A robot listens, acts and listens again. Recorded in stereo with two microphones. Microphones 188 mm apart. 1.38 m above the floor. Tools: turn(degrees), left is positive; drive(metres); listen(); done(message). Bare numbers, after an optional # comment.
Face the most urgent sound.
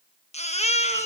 # The baby crying: about 35° left or 145° left.
turn(35)
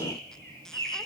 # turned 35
listen()
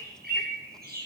listen()
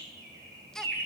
done("Found it: a baby crying, straight ahead.")